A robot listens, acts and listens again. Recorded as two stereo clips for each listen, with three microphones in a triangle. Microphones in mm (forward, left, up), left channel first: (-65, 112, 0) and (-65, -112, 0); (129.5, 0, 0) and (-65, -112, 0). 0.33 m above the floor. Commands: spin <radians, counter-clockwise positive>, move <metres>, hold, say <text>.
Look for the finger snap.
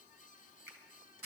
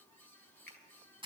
spin -0.26
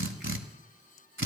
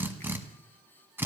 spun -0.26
hold
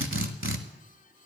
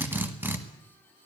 hold
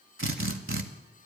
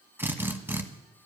say I heard a finger snap from this way, but can't make it out now.